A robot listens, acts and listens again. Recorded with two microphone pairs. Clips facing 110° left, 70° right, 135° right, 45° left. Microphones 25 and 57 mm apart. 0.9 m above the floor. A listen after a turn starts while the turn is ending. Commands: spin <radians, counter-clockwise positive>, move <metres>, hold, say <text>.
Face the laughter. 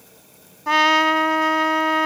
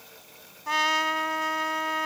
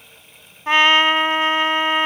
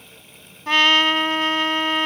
hold
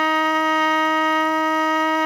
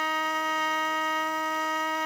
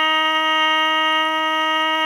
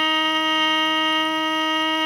hold
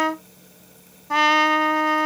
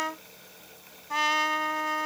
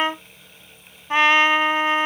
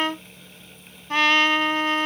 say I can't make out laughter to turn to.